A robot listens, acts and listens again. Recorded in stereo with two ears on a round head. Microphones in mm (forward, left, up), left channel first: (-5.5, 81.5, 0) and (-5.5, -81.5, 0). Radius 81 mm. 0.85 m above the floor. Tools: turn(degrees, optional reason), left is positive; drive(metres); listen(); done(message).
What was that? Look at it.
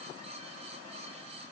listen()
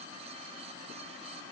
listen()
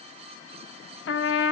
turn(degrees=70, reason="The trumpet: about 70° left or 110° left.")
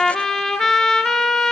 done("Found it: a trumpet, straight ahead, 1 to 2 m away.")